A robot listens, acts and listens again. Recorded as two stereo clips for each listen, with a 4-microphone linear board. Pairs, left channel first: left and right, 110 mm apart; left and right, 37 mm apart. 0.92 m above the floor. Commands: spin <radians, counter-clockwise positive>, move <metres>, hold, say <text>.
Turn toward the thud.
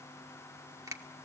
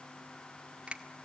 hold
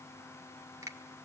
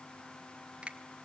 hold
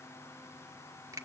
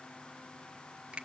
say I can't make out a thud, only a finger snap.